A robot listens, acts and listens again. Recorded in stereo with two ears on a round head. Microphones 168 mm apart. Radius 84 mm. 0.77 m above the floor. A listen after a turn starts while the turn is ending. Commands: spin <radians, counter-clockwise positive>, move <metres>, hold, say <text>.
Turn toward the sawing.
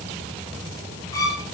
hold
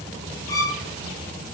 hold
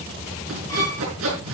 spin -1.57
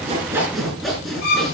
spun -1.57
say Found it: sawing, straight ahead.